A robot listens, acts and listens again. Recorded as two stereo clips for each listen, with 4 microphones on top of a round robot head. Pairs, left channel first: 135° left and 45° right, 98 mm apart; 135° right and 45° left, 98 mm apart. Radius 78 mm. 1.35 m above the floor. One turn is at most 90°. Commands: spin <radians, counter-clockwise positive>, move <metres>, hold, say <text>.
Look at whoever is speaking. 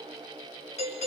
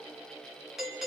hold
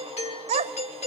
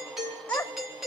spin -1.05
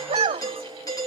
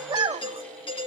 say Facing the child speaking.